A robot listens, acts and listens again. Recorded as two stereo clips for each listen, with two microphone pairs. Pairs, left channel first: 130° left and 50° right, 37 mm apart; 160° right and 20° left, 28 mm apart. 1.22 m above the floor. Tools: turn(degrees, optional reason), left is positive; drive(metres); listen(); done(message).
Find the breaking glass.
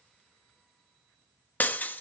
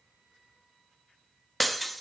turn(degrees=110, reason="The breaking glass: 110° left.")
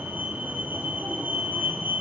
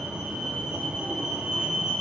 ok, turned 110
done("Facing where the breaking glass came from. I can't hear it now.")